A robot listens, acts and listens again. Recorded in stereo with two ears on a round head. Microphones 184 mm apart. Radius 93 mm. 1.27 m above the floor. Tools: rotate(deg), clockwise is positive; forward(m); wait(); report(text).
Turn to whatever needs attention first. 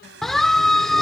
rotate(-30)
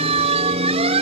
rotate(30)
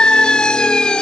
report("Facing the siren.")